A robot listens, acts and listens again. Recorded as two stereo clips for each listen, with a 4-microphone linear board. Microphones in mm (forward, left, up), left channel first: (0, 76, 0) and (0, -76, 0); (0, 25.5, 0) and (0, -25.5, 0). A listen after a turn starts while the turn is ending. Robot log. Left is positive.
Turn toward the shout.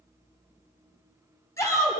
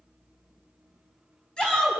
note: The shout: about 20° left or 160° left.
cmd yaw +20
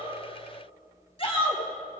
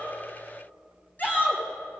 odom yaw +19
note: So it is at 140° left.
cmd yaw +140
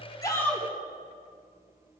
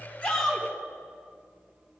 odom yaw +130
note: The shout is now 10° left.
cmd yaw +10
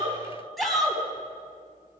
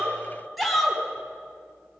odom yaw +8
end: Found it: a shout, straight ahead, 2 to 4 m away.